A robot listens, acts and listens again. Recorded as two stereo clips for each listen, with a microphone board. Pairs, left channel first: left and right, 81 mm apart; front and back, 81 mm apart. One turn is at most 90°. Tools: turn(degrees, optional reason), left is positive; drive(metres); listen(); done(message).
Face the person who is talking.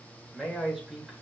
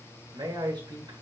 turn(degrees=-90, reason="The man speaking: 175° right.")
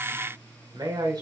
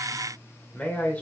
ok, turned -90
turn(degrees=-65, reason="The man speaking is now 65° right.")
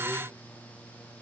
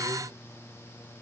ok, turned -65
listen()
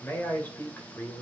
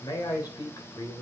turn(degrees=35, reason="The man speaking is now 35° left.")
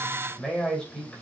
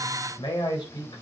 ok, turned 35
turn(degrees=10, reason="The man speaking is now 10° left.")
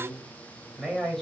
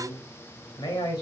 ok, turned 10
done("Found it: a man speaking, straight ahead.")